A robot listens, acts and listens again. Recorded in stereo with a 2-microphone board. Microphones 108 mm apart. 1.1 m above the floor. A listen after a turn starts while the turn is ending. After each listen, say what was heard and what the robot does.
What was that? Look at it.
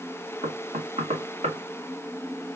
Turn 90° right.
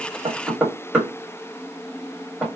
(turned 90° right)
So it is at 10° right. Turn 10° right.
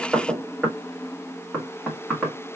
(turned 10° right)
Found it: knocking, straight ahead, 1 to 2 m away.